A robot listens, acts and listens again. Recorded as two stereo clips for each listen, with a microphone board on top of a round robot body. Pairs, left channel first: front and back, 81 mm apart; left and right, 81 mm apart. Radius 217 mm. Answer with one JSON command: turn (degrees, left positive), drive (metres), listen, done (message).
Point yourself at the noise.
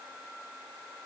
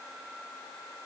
{"listen": true}
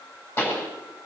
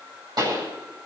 {"turn": -60}
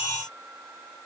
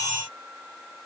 {"done": "Facing where the pop came from. I can't hear it now."}